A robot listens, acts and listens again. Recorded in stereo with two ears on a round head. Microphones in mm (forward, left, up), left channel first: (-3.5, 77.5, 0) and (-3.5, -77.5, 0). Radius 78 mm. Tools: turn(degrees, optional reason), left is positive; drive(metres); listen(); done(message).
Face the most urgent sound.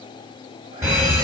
turn(degrees=-15, reason="The fire alarm: about 15° right or 165° right.")
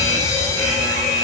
done("Facing the fire alarm.")